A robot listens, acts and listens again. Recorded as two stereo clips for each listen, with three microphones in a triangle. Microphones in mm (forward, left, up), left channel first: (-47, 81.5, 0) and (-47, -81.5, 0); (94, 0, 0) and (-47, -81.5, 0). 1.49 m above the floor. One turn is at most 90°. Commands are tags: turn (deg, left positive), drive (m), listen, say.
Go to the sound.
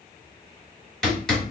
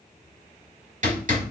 <turn deg="90"/>
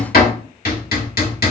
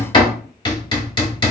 <turn deg="85"/>
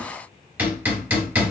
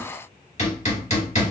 <turn deg="-10"/>
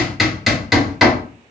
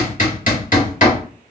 <drive m="1.0"/>
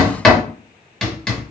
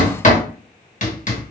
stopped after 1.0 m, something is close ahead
<say>I am next to the hammering.</say>